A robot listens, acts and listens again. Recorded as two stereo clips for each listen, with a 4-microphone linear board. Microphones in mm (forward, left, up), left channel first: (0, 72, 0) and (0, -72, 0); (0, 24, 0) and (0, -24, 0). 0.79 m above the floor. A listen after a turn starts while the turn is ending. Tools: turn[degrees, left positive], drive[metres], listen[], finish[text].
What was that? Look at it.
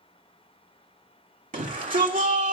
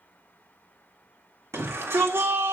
Thought: The shout: about 70° right or 110° right.
Action: turn[-70]
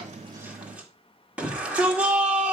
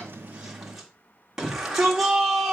Thought: So it is at 10° right.
Action: turn[-10]
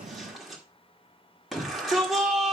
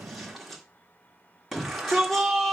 Action: finish[Found it: a shout, straight ahead.]